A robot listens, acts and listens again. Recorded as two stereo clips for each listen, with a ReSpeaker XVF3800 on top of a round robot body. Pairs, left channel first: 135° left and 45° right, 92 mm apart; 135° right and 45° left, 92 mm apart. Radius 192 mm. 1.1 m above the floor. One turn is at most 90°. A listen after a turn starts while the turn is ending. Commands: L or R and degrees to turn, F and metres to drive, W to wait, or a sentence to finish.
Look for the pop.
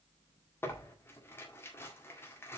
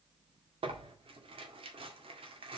W
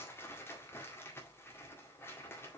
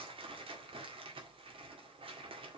W
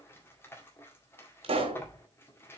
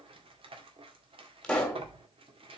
R50
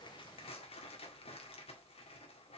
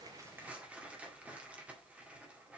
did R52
I heard a pop from this way, but can't make it out now.